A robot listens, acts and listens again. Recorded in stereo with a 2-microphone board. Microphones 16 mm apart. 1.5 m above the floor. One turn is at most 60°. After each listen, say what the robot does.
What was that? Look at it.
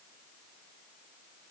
Keep listening.
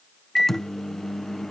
Turn 20° left.
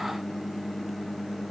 Found it: a microwave, straight ahead.